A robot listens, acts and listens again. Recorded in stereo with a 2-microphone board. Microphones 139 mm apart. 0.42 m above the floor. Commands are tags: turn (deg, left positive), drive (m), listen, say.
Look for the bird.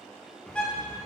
<turn deg="30"/>
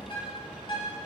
<turn deg="140"/>
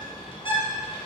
<turn deg="40"/>
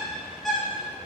<say>Facing the bird, 1 to 2 m away.</say>